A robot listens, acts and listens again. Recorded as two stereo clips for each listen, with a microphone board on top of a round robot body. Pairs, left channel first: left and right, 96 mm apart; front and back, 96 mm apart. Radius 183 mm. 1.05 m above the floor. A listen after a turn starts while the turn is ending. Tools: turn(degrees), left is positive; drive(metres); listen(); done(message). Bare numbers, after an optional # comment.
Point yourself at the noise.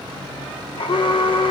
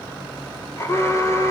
# The alarm: 65° left.
turn(65)
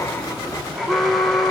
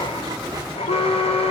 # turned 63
done("Facing the alarm, 1 to 2 m away.")